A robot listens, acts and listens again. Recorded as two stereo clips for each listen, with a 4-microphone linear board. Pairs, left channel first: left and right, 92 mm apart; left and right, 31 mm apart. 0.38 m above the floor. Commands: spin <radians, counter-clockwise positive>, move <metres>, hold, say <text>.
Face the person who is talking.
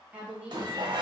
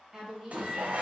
spin -0.52
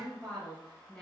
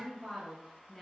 spin 0.26
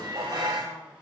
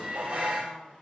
hold
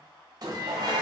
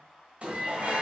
hold
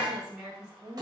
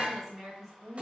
say Found it: a woman speaking, straight ahead, 1 to 2 m away.